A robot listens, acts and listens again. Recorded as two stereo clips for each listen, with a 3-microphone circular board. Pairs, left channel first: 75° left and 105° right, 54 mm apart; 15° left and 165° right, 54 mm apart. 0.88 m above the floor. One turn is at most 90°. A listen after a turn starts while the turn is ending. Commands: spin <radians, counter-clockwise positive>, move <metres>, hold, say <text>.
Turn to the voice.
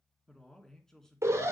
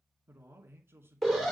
spin 1.57
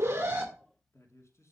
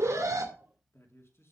spin 0.87
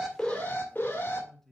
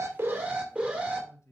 spin -0.17
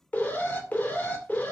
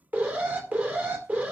hold
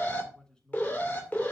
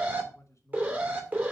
say Found it: a man speaking, straight ahead, 2 to 4 m away.